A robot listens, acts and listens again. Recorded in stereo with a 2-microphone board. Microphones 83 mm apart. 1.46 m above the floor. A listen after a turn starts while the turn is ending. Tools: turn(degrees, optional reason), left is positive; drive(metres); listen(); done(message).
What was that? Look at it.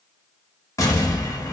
turn(degrees=40, reason="The explosion: about 40° left or 140° left.")
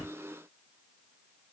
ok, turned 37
listen()
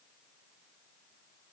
done("I heard an explosion, but can't make it out now. It was about straight ahead or 105° left.")